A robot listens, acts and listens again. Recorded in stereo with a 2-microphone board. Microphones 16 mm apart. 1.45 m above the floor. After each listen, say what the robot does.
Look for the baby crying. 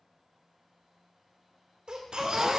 Turn 75° right.
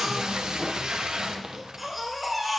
Turn 15° right.
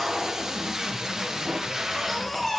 Facing the baby crying.